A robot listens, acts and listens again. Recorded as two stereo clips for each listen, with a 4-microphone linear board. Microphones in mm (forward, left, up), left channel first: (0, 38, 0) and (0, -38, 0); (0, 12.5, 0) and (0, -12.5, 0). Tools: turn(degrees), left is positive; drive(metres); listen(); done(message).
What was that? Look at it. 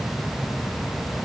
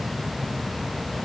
listen()
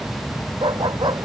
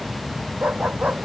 turn(degrees=-90)
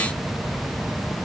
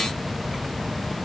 listen()
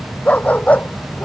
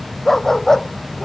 turn(degrees=20)
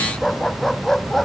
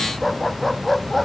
done("Facing the dog barking.")